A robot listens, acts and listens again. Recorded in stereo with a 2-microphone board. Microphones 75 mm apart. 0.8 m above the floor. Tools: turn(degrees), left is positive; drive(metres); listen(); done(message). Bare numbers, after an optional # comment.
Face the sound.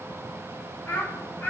# The child speaking: about 20° left or 160° left.
turn(20)
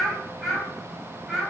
done("Found it: a child speaking, straight ahead.")